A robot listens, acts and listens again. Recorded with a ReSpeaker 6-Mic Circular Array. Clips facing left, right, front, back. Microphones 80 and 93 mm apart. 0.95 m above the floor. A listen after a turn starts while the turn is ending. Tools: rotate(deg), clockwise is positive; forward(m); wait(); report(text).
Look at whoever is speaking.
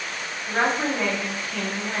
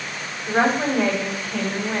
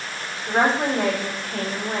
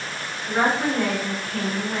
rotate(10)
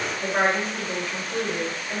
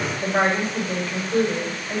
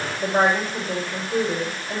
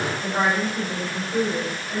report("Found it: a woman speaking, straight ahead.")